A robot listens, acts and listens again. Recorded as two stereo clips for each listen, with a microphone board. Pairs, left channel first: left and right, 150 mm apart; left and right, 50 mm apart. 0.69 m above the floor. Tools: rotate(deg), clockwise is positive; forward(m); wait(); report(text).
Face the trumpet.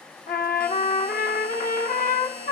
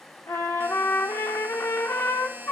rotate(-70)
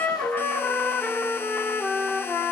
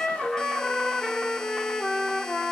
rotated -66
rotate(-15)
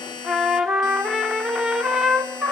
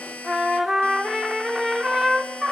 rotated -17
report("Found it: a trumpet, straight ahead, 1 to 2 m away.")